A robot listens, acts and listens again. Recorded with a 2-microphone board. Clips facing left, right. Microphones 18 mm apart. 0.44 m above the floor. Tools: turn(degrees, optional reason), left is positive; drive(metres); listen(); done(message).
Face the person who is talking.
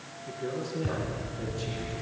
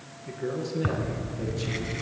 turn(degrees=-30)
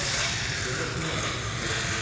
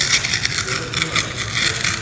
listen()
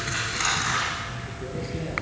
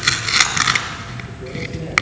listen()
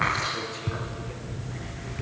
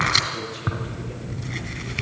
done("I heard a man speaking, but can't make it out now. It was about 20° left or 140° right.")